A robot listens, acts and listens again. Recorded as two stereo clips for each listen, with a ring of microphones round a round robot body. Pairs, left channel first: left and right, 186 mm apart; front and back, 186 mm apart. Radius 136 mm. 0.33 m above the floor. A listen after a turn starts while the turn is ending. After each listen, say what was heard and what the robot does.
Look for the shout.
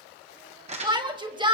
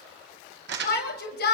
The shout: 25° right. Turn 25° right.
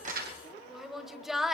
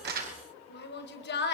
Facing the shout, 1 to 2 m away.